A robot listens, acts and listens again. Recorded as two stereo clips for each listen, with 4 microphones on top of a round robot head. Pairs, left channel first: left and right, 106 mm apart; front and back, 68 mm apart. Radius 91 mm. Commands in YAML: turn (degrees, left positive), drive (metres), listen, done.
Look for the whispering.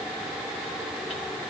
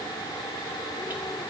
listen: true
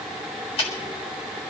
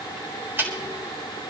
listen: true
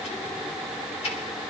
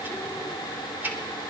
done: "I can't make out whispering, only ticking."